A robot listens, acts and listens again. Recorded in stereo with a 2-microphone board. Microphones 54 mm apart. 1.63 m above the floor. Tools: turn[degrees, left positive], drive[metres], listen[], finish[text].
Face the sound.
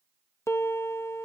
Thought: The piano: about 65° left or 115° left.
Action: turn[65]
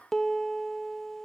Action: finish[Facing the piano.]